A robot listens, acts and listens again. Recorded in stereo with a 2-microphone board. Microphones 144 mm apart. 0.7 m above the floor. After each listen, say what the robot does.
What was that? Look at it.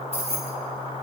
Turn 45° right.
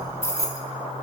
Turn 20° left.
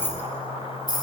Turn 30° left.
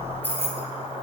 Turn 15° left.
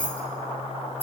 Turn 15° left.
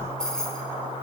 Found it: keys jangling, straight ahead, 2 to 4 m away.